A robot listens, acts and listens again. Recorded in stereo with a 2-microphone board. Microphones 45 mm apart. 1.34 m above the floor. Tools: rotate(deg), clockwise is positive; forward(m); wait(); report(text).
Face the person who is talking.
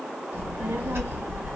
rotate(65)
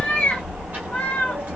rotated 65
rotate(40)
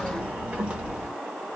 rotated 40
rotate(30)
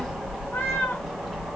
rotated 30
report("Found it: a child speaking, straight ahead.")